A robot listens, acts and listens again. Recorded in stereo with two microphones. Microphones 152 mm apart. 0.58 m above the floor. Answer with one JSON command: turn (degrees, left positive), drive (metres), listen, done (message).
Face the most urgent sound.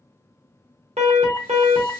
{"turn": -45}
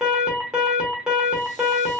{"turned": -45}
{"done": "Facing the alarm."}